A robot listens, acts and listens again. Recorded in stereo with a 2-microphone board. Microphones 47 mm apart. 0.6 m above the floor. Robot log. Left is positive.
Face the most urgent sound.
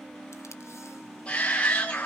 note: The shout: about 25° left or 155° left.
cmd yaw +25
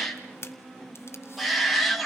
end: Facing the shout, 1 to 2 m away.